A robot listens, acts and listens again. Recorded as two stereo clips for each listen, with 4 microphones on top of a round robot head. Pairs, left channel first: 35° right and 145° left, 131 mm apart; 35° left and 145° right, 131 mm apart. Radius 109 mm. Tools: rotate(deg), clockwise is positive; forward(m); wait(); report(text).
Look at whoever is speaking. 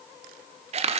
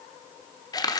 wait()
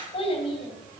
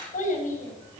rotate(-10)
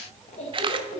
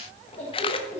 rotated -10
report("Facing the child speaking, 2 to 4 m away.")